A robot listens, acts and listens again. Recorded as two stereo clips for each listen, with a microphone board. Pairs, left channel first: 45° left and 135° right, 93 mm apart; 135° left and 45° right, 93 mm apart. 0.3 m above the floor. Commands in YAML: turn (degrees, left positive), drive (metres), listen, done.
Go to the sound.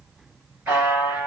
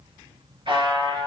turn: -65
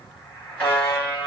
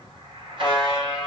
turn: -20
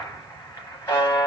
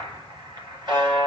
drive: 1.0
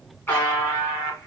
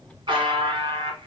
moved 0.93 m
turn: -20
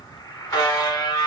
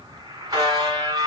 drive: 1.0
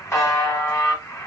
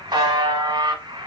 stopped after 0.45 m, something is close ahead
turn: -10
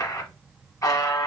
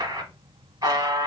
done: "Arrived at the buzzer, straight ahead."